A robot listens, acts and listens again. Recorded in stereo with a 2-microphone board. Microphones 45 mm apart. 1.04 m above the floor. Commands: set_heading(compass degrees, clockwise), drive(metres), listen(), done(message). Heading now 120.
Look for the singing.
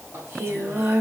set_heading(185)
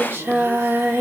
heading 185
set_heading(240)
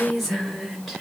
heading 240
done("Facing the singing.")